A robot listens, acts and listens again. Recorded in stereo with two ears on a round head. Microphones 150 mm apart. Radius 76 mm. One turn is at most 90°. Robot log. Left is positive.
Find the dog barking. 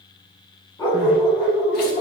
note: The dog barking: about 30° left or 150° left.
cmd yaw +30
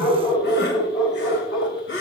note: So it is at 120° left.
cmd yaw +90
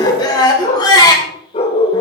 note: The dog barking is now 35° left.
cmd yaw +35
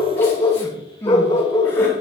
note: The dog barking is now 25° left.
cmd yaw +25
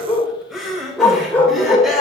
note: The dog barking is now 10° left.
cmd yaw +10
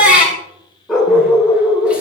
end: Found it: a dog barking, straight ahead, 2 to 4 m away.